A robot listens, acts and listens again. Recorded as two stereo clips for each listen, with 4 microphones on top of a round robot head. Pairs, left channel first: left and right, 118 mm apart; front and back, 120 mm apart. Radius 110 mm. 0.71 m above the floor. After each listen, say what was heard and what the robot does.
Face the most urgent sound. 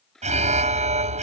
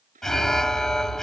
The alarm: 85° right. Turn 85° right.
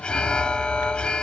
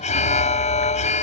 Found it: an alarm, straight ahead.